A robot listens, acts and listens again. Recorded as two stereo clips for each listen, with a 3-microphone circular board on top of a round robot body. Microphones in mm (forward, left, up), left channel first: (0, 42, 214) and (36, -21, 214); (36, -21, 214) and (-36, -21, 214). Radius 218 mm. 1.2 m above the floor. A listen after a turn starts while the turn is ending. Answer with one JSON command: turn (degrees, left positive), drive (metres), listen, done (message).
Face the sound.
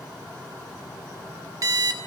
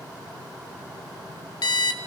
{"turn": -15}
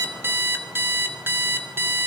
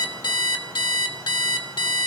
{"done": "Found it: an alarm clock, straight ahead, 2 to 4 m away."}